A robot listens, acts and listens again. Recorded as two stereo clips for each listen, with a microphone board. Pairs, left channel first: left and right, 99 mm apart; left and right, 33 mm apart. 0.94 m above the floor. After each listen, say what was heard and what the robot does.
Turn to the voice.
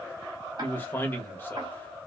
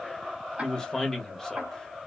The man speaking: about 20° left or 160° left. Turn 20° left.
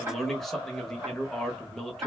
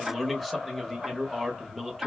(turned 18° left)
Found it: a man speaking, straight ahead.